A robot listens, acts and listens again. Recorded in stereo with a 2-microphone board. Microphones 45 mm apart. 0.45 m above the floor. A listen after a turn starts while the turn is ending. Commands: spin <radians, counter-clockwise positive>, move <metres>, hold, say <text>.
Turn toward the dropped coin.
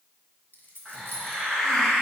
spin 0.87
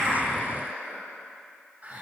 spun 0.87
hold
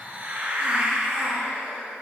say I heard a dropped coin, but can't make it out now. It was about straight ahead or 80° left.